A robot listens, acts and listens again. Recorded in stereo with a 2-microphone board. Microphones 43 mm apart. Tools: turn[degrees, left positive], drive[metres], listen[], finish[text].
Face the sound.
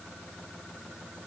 Action: listen[]
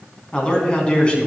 Thought: The man speaking: about 25° left or 155° left.
Action: turn[25]
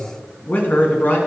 Thought: So it is at 130° left.
Action: turn[130]
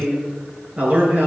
Thought: The man speaking is now 40° right.
Action: turn[-40]
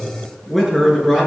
Action: finish[Found it: a man speaking, straight ahead.]